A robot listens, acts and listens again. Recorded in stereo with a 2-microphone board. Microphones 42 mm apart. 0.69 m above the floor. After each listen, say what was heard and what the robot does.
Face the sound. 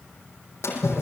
Turn 90° left.
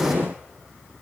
Facing where the splash came from. I can't hear it now.